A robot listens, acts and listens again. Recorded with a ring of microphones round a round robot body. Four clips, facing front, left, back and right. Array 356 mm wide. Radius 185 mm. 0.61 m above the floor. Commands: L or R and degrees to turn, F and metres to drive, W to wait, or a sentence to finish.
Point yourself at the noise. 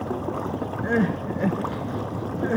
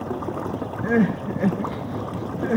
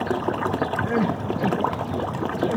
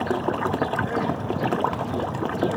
L50
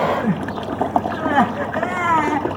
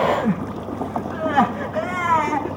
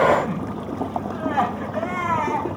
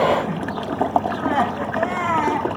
L10
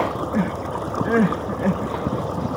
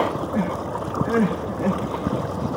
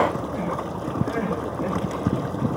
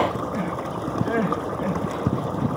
Found it: crying, straight ahead.